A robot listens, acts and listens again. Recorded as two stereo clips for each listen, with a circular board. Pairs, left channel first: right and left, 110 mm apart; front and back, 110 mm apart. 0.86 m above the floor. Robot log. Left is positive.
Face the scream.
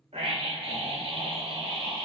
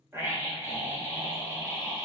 note: The scream: 110° left.
cmd yaw +110
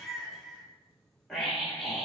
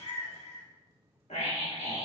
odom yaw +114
end: Facing the scream.